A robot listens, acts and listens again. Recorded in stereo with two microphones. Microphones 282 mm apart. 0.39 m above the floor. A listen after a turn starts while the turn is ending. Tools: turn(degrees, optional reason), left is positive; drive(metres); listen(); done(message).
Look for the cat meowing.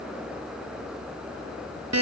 listen()
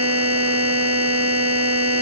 listen()
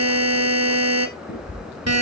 turn(degrees=40, reason="The cat meowing: about 40° left or 140° left.")
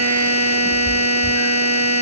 listen()
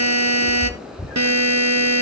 done("Facing the cat meowing.")